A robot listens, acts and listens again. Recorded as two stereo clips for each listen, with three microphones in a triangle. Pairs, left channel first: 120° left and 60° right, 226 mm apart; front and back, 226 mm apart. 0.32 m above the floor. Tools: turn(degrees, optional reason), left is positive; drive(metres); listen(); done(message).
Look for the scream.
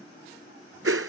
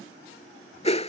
listen()
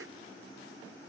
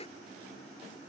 listen()
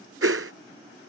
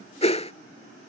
done("I can't make out a scream to turn to.")